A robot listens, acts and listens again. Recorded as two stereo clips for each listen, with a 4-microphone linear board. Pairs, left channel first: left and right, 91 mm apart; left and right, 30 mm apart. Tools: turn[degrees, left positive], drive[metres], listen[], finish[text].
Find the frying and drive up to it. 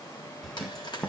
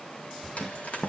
Thought: The frying: about 55° left or 125° left.
Action: turn[55]
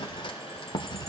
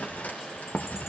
Action: listen[]
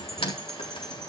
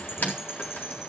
Thought: So it is at 75° left.
Action: turn[75]
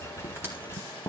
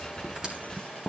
Action: listen[]
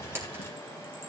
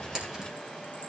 Thought: The frying is now 25° right.
Action: turn[-25]
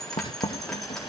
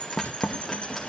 Action: listen[]
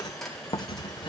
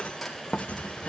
Action: drive[1.0]
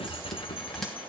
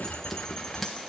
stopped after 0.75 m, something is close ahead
Action: listen[]
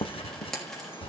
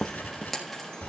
Action: finish[Something is in my way. I am facing the frying but have not reached it.]